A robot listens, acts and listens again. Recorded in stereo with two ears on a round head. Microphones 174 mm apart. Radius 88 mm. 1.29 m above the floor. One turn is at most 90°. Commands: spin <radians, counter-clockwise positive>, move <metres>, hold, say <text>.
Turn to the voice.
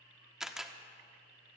hold
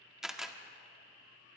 hold
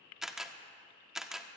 say I can't make out anyone speaking to turn to.